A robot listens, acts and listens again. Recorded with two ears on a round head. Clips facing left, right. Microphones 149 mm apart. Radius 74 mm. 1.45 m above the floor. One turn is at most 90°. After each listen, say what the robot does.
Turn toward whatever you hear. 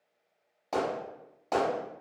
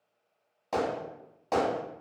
Turn 30° left.
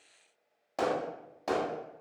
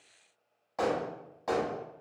Turn 90° left.
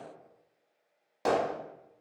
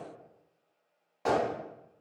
Turn 55° left.
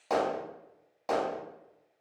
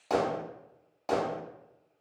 Found it: hammering, straight ahead.